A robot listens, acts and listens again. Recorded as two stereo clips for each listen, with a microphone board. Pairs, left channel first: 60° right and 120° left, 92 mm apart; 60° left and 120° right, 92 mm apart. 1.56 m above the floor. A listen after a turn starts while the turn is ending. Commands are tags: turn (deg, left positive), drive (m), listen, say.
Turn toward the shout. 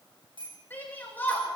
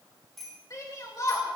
<turn deg="10"/>
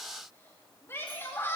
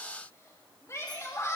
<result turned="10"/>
<say>Facing the shout.</say>